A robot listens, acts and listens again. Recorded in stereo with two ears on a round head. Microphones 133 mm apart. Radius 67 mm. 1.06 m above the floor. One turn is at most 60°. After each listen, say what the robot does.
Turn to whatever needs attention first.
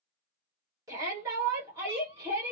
Turn 25° right.
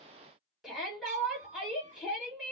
Found it: a shout, straight ahead.